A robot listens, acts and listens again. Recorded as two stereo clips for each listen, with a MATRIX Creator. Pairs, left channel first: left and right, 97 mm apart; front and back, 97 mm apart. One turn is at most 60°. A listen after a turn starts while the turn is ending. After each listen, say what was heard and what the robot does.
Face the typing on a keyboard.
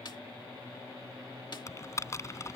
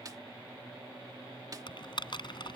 The typing on a keyboard: 35° left. Turn 35° left.
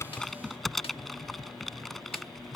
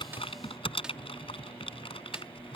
Found it: typing on a keyboard, straight ahead.